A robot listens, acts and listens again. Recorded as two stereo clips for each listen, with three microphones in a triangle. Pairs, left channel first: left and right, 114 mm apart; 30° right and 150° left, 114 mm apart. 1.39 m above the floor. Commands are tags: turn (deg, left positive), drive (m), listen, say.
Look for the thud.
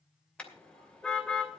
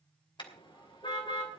<listen/>
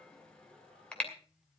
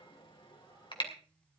<listen/>
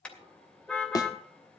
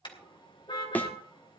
<turn deg="40"/>
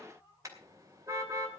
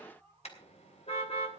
<say>Facing where the thud came from. I can't hear it now.</say>